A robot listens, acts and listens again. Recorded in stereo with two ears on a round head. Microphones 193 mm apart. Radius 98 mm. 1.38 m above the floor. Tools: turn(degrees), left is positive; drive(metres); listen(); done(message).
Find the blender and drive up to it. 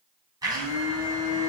turn(degrees=-20)
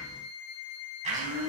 turn(degrees=-145)
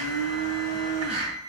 turn(degrees=-30)
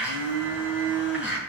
drive(metres=1.0)
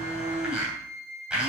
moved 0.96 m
drive(metres=1.0)
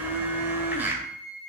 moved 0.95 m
turn(degrees=-10)
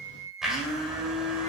drive(metres=1.0)
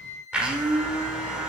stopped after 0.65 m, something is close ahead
done("Arrived at the blender, straight ahead.")